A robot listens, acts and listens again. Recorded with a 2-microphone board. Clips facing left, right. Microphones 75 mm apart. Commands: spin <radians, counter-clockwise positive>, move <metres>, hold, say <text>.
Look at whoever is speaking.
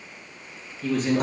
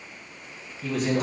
spin -0.52
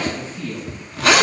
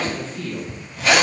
spin 0.35
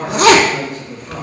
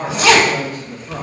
say Found it: a man speaking, straight ahead.